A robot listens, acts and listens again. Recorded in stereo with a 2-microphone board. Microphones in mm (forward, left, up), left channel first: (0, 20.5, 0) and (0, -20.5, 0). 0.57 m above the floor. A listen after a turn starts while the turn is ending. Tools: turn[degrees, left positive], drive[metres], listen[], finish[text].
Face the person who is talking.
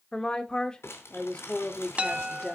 Thought: The woman speaking: about 20° left or 160° left.
Action: turn[20]
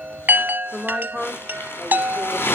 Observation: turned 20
Action: finish[Facing the woman speaking.]